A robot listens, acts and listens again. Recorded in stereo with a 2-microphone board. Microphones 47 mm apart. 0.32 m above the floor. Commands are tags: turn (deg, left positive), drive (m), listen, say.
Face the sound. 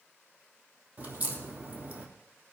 <turn deg="-35"/>
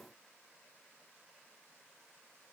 <listen/>
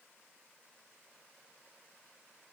<say>I heard a crack, but can't make it out now. It was about straight ahead or 110° right.</say>